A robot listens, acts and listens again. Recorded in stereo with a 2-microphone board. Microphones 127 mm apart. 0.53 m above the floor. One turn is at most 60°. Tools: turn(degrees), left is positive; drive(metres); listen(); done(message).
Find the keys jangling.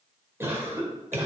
listen()
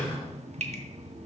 listen()
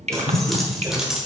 turn(degrees=-30)
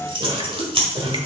turn(degrees=-60)
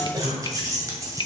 turn(degrees=-25)
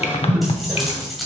done("Facing the keys jangling, 2 to 4 m away.")